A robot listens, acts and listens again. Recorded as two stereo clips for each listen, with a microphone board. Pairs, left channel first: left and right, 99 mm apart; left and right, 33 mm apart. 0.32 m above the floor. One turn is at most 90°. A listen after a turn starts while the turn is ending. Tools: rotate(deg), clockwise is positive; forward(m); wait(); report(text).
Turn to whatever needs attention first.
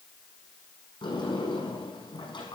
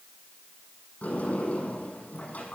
wait()
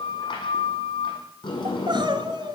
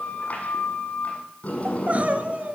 rotate(55)
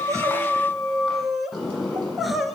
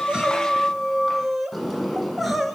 report("Facing the crying.")